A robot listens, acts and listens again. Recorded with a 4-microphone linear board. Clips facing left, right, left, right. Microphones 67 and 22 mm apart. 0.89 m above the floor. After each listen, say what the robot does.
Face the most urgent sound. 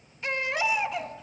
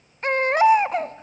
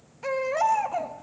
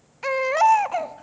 Turn 50° right.
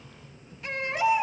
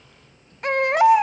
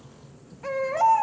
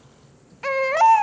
Turn 80° right.
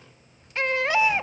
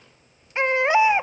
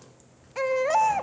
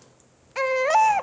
Turn 25° right.
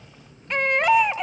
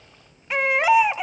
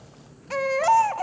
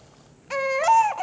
Facing the baby crying.